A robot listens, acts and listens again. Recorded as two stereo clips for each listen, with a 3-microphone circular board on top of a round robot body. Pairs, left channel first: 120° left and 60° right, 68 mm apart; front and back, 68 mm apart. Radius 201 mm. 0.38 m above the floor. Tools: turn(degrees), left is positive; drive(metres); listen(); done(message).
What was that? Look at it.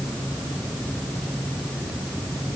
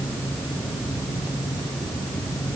listen()
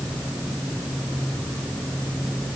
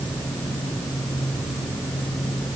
listen()
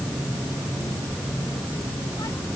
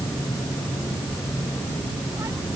done("I can't make out anything to turn to.")